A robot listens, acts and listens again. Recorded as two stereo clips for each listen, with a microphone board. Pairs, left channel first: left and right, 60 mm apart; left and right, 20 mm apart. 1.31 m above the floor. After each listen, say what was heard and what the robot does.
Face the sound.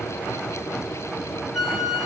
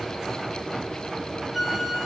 Turn 30° right.
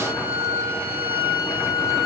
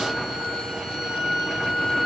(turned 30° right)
So it is at 145° right. Turn 145° right.
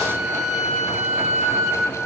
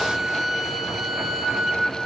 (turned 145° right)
Found it: a flute, straight ahead, 2 to 4 m away.